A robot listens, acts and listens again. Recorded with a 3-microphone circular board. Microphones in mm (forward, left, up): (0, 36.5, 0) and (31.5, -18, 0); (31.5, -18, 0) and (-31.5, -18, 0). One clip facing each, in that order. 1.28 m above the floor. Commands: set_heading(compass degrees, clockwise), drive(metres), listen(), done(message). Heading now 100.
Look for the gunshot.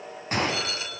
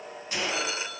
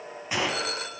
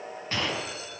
set_heading(25)
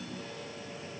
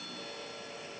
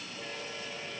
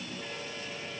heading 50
set_heading(25)
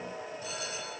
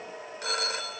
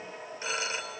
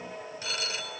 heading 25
done("I heard a gunshot from this way, but can't make it out now.")